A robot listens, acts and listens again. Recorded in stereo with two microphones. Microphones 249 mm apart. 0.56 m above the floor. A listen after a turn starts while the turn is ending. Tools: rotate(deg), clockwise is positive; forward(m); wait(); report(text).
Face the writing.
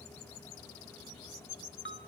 wait()
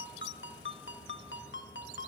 wait()
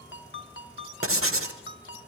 rotate(60)
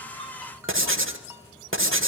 rotate(55)
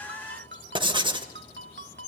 rotate(20)
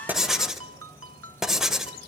report("Facing the writing, 1 to 2 m away.")